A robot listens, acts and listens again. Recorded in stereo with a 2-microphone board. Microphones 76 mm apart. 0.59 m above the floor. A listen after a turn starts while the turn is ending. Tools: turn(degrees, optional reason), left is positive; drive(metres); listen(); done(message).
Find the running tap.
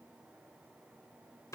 listen()
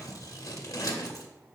listen()
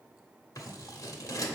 done("I can't make out a running tap to turn to.")